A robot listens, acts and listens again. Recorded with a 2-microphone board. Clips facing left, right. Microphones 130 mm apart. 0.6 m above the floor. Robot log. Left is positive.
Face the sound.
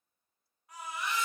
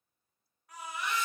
cmd yaw +30
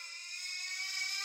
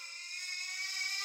note: So it is at 30° right.
cmd yaw -30
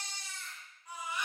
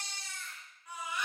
note: The baby crying is now 15° left.
cmd yaw +15
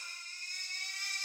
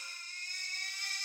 end: Found it: a baby crying, straight ahead, 1 to 2 m away.